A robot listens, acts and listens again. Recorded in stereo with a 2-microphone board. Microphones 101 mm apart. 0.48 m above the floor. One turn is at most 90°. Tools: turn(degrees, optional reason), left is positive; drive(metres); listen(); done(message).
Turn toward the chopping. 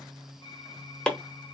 turn(degrees=30)
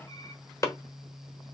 turn(degrees=90, reason="So it is at 145° left.")
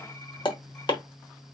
turn(degrees=55, reason="The chopping is now 55° left.")
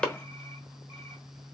turn(degrees=10, reason="The chopping is now 10° left.")
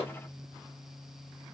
listen()
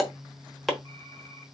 done("Found it: chopping, straight ahead, 1 to 2 m away.")